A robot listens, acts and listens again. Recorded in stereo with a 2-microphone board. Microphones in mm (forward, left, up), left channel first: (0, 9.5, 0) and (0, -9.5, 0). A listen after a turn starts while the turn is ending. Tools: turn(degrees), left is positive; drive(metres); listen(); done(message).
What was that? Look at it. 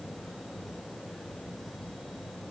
listen()
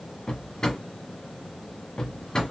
turn(degrees=40)
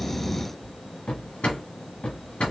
turn(degrees=100)
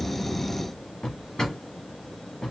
turn(degrees=35)
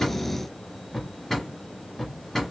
turn(degrees=10)
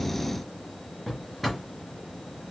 done("Found it: a drawer, straight ahead.")